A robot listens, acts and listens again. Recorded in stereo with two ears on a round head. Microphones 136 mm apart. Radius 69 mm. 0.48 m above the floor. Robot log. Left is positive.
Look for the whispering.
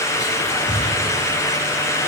cmd yaw -30
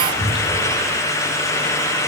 note: So it is at 130° right.
cmd yaw -130
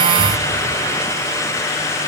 note: The whispering is now 25° left.
cmd yaw +25
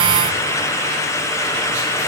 cmd idle
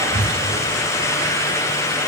note: The whispering is now 10° right.
cmd yaw -10
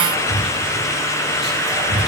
end: Found it: whispering, straight ahead.